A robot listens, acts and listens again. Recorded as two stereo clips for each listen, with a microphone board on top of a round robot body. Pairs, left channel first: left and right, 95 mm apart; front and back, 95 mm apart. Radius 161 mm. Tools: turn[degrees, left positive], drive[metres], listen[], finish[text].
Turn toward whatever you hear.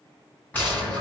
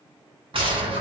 Thought: The gunshot: 160° left.
Action: turn[160]
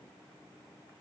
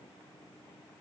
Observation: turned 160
Action: finish[I heard a gunshot from this way, but can't make it out now.]